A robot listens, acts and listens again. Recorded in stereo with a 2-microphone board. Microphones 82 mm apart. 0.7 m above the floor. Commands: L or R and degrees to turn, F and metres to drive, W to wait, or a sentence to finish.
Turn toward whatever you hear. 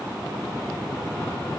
W
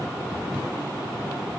W
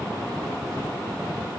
I can't make out anything to turn to.